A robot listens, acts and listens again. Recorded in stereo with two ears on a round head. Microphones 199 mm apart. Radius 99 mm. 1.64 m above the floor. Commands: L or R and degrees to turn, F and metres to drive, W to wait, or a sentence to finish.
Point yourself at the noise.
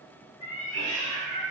L30
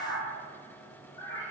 L15
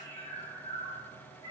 L15
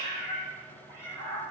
L20
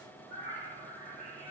L145
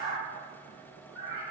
R20
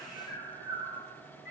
Found it: a cat meowing, straight ahead.